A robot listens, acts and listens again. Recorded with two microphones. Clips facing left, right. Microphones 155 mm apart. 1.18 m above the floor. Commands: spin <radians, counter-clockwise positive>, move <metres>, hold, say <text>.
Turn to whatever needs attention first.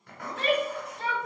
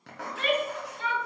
spin 0.61
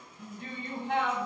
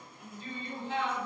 spin 1.75
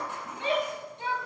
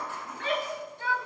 spin 0.44
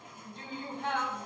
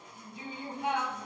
spin -0.17
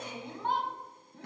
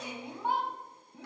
say Facing the shout.